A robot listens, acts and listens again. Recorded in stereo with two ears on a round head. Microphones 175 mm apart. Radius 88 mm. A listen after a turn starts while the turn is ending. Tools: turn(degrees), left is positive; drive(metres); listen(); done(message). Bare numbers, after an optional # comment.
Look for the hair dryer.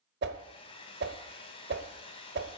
# The hair dryer: about 30° left or 150° left.
turn(30)
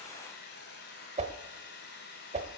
# So it is at 125° left.
turn(125)
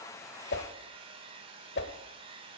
# The hair dryer is now 30° right.
turn(-30)
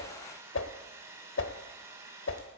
# The hair dryer is now 15° right.
turn(-15)
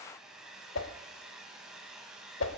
done("Found it: a hair dryer, straight ahead.")